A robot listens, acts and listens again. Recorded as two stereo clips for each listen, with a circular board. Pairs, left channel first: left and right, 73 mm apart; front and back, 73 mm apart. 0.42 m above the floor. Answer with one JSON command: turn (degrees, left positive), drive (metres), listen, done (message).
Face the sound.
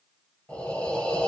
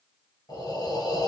{"turn": 15}
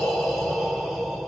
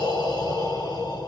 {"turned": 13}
{"done": "Found it: breathing, straight ahead."}